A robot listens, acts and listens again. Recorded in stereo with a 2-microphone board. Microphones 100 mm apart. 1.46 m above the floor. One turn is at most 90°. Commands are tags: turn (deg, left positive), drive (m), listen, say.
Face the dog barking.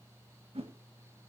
<listen/>
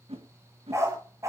<turn deg="-30"/>
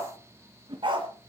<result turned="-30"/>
<turn deg="-90"/>
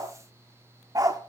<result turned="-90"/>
<turn deg="-35"/>
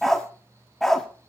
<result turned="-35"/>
<say>Found it: a dog barking, straight ahead.</say>